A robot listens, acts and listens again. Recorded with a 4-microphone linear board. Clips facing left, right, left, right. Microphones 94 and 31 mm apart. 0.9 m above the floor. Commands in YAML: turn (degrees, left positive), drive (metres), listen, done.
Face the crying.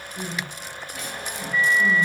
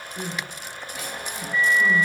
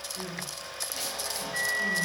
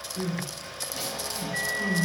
turn: -30
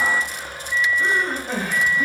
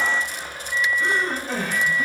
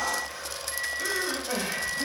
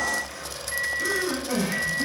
turn: 20
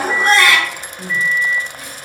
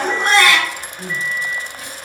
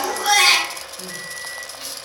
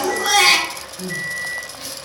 done: "Found it: crying, straight ahead."